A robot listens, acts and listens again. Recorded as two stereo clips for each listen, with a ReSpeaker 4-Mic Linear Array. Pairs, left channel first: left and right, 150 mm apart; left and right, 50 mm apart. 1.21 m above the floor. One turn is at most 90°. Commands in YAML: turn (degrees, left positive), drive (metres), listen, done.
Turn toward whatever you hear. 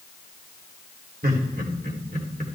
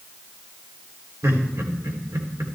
turn: -90
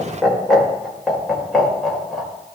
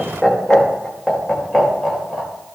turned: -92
done: "Facing the laughter."